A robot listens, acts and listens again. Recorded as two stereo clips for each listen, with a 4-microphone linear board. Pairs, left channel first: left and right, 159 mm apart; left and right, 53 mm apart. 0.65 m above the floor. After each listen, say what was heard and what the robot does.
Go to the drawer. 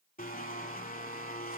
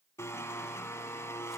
Keep listening.
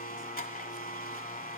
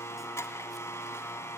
Keep listening.
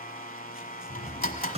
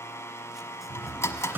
The drawer: about 40° right or 140° right. Turn 40° right.
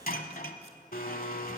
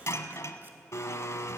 Keep listening.
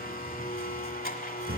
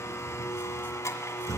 So it is at 100° right. Turn 100° right.
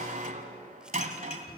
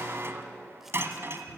Keep listening.
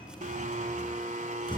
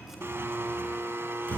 The drawer is now 30° left. Turn 30° left.
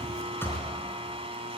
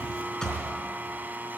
The drawer is now 15° left. Turn 15° left.
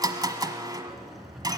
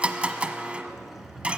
Drive 1.0 m forward.
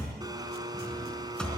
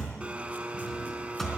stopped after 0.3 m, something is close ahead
Something is in my way. I am facing the drawer but have not reached it.